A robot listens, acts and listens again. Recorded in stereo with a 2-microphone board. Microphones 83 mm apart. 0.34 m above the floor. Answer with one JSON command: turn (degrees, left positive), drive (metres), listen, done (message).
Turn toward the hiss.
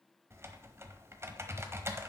{"listen": true}
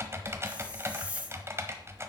{"turn": -30}
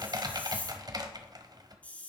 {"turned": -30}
{"turn": 15}
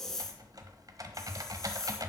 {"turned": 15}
{"done": "Found it: a hiss, straight ahead, 1 to 2 m away."}